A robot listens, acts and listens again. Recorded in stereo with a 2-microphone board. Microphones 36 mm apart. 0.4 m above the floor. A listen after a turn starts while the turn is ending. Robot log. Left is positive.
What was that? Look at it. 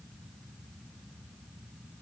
cmd idle
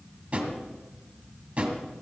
note: The drawer: about 30° right or 150° right.
cmd yaw -30
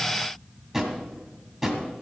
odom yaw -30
end: Facing the drawer.